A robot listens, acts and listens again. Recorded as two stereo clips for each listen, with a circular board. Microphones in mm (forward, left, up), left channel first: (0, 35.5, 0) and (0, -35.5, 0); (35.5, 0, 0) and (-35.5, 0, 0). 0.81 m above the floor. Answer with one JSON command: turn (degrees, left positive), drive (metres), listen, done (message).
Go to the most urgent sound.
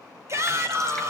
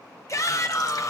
{"turn": -45}
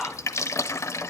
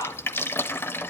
{"drive": 1.0}
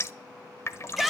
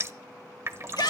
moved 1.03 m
{"drive": 1.0}
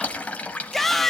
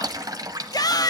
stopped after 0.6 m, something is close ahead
{"done": "Arrived at the shout, straight ahead."}